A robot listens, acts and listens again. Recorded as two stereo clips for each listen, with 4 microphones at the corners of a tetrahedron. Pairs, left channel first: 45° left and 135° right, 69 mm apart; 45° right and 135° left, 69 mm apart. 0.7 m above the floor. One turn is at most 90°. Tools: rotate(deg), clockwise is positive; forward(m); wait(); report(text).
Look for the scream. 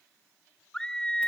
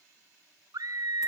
rotate(-90)
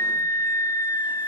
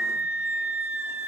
rotate(-70)
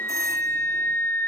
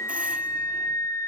rotate(10)
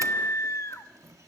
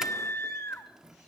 report("Found it: a scream, straight ahead.")